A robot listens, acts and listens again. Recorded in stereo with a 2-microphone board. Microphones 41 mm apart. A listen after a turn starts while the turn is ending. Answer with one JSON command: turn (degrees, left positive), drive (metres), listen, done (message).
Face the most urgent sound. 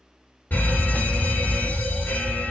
{"turn": 50}
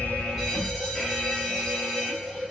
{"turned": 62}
{"done": "Found it: a fire alarm, straight ahead, 2 to 4 m away."}